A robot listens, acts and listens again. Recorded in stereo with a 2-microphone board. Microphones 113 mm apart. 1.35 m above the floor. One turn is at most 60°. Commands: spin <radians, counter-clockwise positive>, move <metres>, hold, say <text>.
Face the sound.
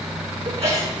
spin -1.05
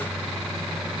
hold
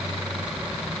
say I heard a sneeze, but can't make it out now. It was about straight ahead or 60° right.